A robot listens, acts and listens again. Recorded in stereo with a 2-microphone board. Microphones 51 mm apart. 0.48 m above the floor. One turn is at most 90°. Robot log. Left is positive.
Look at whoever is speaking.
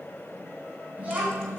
note: The child speaking: about 30° right or 150° right.
cmd yaw -30
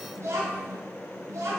note: So it is at 105° right.
cmd yaw -90
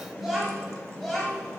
note: The child speaking is now 10° left.
cmd yaw +10
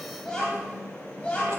note: The child speaking is now 25° left.
cmd yaw +25
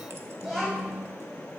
end: Facing the child speaking, 1 to 2 m away.